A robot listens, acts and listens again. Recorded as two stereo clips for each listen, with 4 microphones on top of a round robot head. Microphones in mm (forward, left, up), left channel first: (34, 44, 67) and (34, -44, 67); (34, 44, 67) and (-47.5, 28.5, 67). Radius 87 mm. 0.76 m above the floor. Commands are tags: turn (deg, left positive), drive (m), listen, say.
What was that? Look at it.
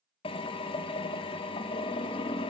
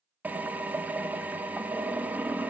<turn deg="120"/>
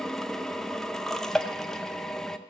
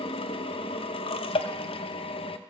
<say>Found it: a drill, straight ahead, under 1 m away.</say>